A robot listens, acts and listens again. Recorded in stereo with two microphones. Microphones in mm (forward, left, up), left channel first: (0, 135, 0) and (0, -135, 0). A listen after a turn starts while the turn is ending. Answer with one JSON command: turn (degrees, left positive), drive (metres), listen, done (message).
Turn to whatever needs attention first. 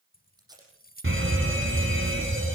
{"turn": -50}
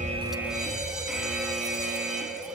{"done": "Facing the fire alarm."}